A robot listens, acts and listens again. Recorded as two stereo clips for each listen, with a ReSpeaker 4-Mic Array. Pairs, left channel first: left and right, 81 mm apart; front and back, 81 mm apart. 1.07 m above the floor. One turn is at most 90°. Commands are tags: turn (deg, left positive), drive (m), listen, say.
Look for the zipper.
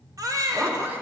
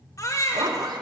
<turn deg="-90"/>
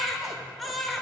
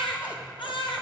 <turn deg="-65"/>
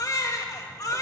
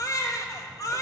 <listen/>
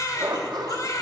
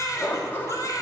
<turn deg="-60"/>
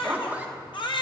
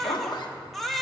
<turn deg="-20"/>
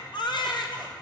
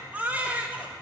<listen/>
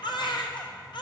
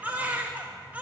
<listen/>
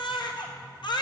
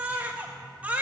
<say>I heard a zipper from this way, but can't make it out now.</say>